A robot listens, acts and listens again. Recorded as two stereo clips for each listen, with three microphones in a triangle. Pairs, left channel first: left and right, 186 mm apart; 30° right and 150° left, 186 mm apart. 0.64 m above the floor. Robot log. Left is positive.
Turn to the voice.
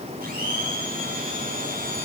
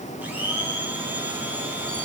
cmd idle
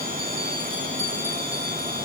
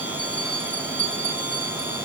cmd idle
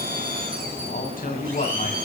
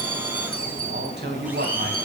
note: The man speaking: 130° left.
cmd yaw +130
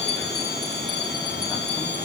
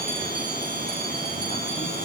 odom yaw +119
note: Nothing new. It was at 10° left.
cmd yaw +10
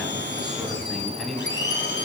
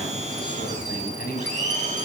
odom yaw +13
end: Facing the man speaking, over 4 m away.